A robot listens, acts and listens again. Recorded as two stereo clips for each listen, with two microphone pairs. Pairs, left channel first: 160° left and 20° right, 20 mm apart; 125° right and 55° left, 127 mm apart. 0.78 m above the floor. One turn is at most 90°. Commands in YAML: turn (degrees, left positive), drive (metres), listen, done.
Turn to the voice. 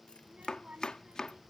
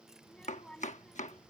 turn: -40
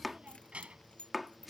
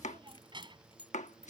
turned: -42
done: "Facing the child speaking."